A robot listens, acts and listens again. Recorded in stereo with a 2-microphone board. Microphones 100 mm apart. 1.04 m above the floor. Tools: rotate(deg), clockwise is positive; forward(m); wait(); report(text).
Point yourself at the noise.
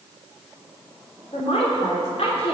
rotate(-90)
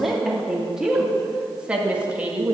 rotate(15)
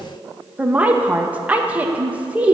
rotate(15)
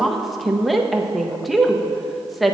report("Found it: a woman speaking, straight ahead.")